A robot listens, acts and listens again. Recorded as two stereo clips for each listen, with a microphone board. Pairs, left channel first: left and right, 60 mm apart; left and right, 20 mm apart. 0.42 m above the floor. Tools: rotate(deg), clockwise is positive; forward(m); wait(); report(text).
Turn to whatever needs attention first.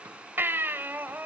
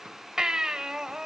rotate(35)
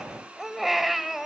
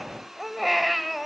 report("Found it: a baby crying, straight ahead.")